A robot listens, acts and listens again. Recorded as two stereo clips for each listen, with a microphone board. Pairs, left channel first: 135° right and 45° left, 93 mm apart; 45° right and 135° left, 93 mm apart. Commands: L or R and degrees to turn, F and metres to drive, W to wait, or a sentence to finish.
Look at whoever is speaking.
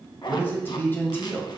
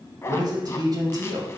L165
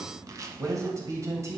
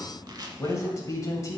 Facing the man speaking.